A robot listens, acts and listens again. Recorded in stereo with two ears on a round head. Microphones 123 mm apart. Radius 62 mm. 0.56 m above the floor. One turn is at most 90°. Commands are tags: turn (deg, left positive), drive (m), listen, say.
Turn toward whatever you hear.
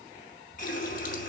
<turn deg="60"/>
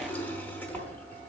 <turn deg="15"/>
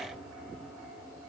<say>Found it: a running tap, straight ahead.</say>